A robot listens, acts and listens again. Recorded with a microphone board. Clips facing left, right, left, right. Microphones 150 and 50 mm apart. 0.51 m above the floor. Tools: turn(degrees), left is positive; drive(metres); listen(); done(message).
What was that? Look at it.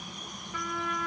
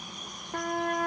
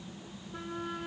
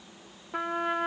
turn(degrees=-55)
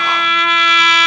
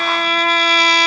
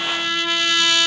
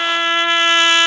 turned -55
turn(degrees=-45)
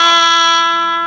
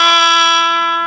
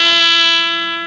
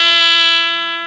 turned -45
done("Facing the trumpet.")